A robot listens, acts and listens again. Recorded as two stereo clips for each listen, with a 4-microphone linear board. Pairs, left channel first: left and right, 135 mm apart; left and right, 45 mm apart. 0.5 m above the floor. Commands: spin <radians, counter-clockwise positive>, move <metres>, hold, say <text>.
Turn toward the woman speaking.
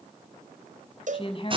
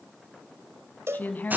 spin 0.70
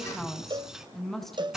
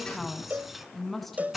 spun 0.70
say Facing the woman speaking.